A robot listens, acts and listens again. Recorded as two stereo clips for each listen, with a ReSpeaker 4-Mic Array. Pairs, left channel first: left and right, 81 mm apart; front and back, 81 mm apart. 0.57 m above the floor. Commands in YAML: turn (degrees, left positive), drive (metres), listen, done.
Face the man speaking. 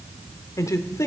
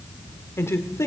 turn: 45
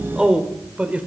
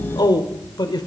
turn: -20
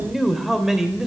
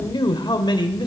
turn: -10
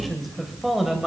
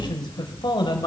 done: "Found it: a man speaking, straight ahead."